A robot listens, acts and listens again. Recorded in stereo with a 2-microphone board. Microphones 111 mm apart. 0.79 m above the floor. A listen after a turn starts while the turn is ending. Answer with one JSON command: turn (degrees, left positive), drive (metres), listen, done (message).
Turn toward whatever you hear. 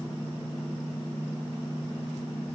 {"listen": true}
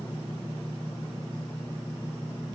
{"listen": true}
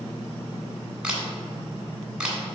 {"turn": -30}
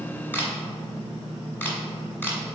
{"turn": 20}
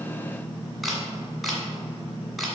{"done": "Found it: a camera shutter, straight ahead, 1 to 2 m away."}